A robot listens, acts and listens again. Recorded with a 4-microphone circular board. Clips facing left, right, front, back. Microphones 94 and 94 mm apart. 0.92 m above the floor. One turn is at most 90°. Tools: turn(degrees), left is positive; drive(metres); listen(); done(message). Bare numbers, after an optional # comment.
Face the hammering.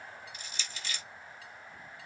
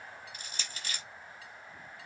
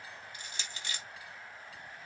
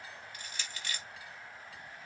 listen()
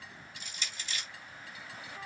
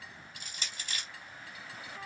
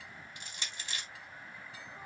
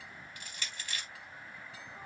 listen()
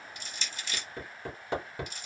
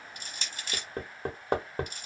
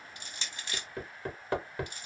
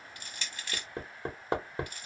# The hammering: 120° right.
turn(-90)
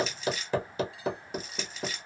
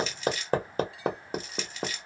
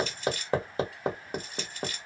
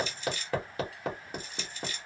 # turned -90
# The hammering is now 55° right.
turn(-55)
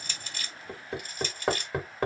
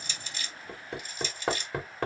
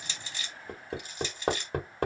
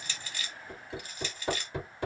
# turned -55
done("Found it: hammering, straight ahead, 1 to 2 m away.")